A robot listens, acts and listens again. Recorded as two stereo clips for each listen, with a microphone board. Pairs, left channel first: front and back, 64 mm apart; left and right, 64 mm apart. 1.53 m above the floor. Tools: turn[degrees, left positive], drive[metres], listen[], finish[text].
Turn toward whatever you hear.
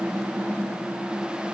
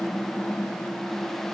Action: listen[]
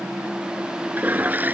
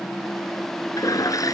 Thought: The toilet flushing: 120° left.
Action: turn[120]
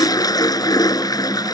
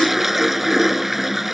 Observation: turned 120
Action: finish[Found it: a toilet flushing, straight ahead.]